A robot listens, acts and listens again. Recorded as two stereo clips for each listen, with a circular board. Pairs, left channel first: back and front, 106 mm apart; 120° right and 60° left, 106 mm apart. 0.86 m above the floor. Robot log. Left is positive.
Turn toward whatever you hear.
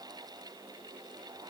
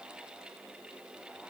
cmd idle
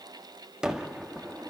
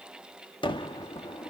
note: The gunshot: 85° right.
cmd yaw -85
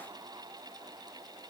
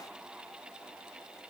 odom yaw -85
end: I heard a gunshot from this way, but can't make it out now.